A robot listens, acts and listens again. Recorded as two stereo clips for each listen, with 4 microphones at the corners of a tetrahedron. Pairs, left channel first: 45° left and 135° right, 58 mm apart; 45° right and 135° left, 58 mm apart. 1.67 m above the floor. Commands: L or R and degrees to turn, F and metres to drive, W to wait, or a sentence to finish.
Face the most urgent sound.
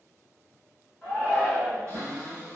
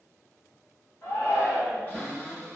R25
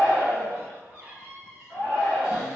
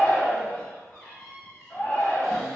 L10
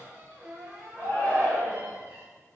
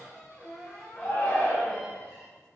Found it: a shout, straight ahead.